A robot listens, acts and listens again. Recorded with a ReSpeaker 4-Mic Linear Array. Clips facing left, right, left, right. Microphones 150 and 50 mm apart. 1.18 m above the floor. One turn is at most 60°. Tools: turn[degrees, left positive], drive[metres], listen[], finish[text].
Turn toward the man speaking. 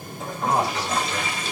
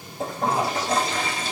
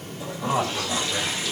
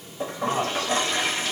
Thought: The man speaking: about 50° left or 130° left.
Action: turn[50]
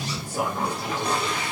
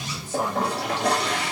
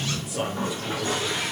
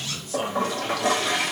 Thought: So it is at 10° left.
Action: turn[10]
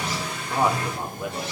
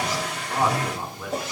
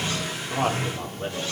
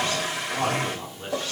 Thought: The man speaking is now 20° left.
Action: turn[20]
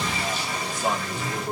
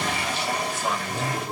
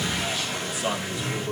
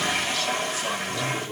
Thought: The man speaking is now 20° left.
Action: turn[20]
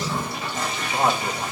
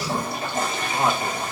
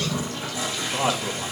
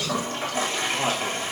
Action: finish[Facing the man speaking.]